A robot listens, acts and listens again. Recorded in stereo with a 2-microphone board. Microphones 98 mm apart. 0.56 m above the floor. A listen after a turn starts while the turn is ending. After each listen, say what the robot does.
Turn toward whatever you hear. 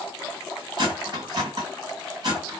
Turn 45° right.
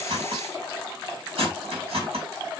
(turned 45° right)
Turn 90° right.
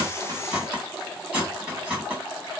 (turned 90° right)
Turn 15° right.
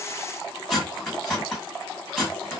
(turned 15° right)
Facing the cutlery clinking, 2 to 4 m away.